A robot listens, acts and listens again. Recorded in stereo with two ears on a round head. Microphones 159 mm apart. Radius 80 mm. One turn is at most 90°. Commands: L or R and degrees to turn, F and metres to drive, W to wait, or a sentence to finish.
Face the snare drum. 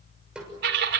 R30
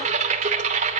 W
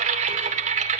W
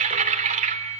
I heard a snare drum, but can't make it out now. It was about 25° left or 145° right.